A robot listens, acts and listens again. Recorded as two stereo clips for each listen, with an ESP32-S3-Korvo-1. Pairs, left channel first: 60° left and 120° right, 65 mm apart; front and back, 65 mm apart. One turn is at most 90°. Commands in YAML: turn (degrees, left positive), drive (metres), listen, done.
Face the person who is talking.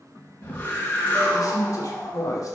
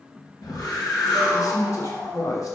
turn: 30
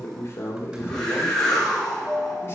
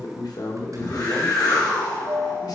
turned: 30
turn: 10
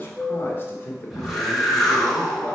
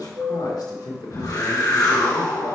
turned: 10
done: "Found it: a man speaking, straight ahead."